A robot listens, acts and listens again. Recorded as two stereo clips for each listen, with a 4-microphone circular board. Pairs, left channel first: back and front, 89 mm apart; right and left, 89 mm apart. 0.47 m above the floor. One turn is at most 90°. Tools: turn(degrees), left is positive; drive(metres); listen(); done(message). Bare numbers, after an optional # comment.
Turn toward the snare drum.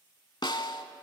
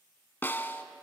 # The snare drum: 155° right.
turn(-90)
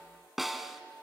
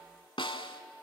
# The snare drum is now 85° right.
turn(-85)
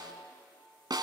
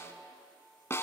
# The snare drum is now 30° right.
turn(-30)
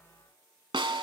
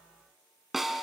done("Found it: a snare drum, straight ahead, under 1 m away.")